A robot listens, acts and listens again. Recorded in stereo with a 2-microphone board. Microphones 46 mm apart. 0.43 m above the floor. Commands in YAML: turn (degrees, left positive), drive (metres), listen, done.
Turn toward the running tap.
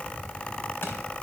listen: true
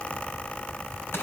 listen: true
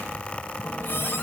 turn: 60
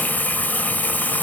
turn: 50
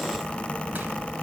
listen: true
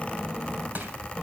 listen: true
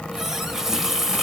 turn: -10
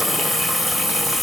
done: "Found it: a running tap, straight ahead, 1 to 2 m away."